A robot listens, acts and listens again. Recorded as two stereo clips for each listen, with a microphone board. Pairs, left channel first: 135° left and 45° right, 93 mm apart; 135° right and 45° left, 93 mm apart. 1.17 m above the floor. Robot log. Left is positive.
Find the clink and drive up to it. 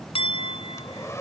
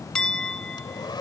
note: The clink: 145° left.
cmd yaw +145
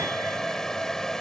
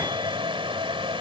cmd idle
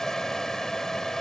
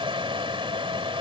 cmd idle
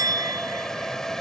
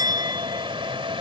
cmd fwd 1.0
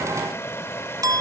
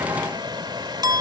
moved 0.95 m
cmd fwd 1.0
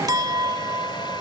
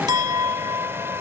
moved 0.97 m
cmd fwd 1.0
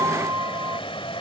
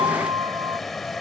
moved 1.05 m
note: The clink is now 10° left.
cmd yaw +10
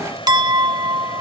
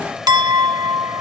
cmd fwd 1.0
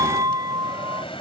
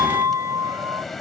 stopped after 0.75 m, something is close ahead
end: Arrived at the clink, straight ahead.